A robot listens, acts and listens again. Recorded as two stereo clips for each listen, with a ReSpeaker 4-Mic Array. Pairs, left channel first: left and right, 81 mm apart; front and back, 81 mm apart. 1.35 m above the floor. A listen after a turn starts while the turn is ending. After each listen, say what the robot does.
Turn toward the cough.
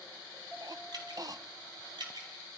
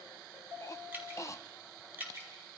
Turn 50° right.
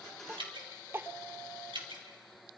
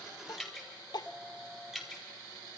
Turn 30° right.
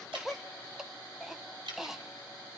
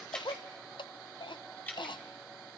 Facing the cough.